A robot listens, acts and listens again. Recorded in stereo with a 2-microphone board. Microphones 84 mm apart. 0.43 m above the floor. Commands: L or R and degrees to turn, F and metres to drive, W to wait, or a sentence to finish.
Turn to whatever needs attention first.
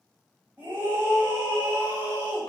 R20
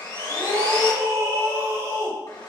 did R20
R135
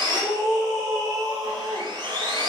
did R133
Found it: a scream, straight ahead, 1 to 2 m away.